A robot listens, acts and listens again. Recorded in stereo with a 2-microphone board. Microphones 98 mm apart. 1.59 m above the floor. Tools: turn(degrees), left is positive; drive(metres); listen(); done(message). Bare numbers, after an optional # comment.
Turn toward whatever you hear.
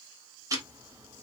# The ticking: about 35° right or 145° right.
turn(-35)
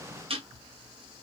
# So it is at 110° right.
turn(-110)
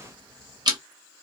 # The ticking is now 45° right.
turn(-45)
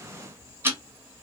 # The ticking is now 25° right.
turn(-25)
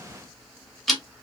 done("Found it: ticking, straight ahead.")